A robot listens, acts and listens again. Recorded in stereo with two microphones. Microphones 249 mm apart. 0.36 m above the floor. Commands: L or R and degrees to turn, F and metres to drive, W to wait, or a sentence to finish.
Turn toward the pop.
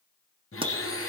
R25
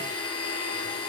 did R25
W
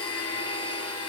I heard a pop, but can't make it out now. It was about straight ahead or 130° right.